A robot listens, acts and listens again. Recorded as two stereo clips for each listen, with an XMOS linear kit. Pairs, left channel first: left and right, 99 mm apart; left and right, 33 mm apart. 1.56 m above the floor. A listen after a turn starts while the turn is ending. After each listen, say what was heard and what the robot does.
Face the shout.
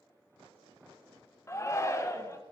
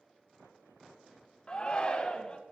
The shout: about 30° left or 150° left. Turn 30° left.
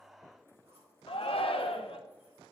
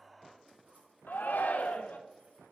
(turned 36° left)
So it is at 115° left. Turn 115° left.
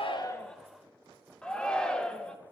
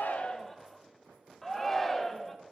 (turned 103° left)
The shout is now 10° left. Turn 10° left.
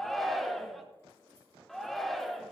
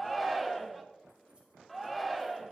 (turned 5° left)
Found it: a shout, straight ahead.